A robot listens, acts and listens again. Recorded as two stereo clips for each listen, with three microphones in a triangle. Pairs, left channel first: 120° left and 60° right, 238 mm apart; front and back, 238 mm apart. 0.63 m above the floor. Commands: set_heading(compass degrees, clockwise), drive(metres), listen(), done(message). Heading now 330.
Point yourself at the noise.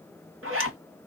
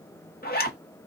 set_heading(15)
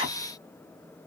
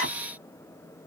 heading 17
done("Found it: a zipper, straight ahead.")